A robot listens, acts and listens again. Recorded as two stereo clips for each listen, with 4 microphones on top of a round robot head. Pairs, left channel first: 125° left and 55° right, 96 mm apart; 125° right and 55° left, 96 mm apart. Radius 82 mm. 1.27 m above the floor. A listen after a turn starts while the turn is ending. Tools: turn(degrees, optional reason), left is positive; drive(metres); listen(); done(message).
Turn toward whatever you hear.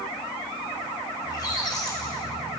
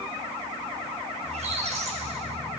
turn(degrees=70, reason="The squeak: 70° left.")
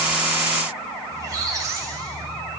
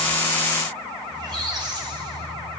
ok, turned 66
done("Facing the squeak, 2 to 4 m away.")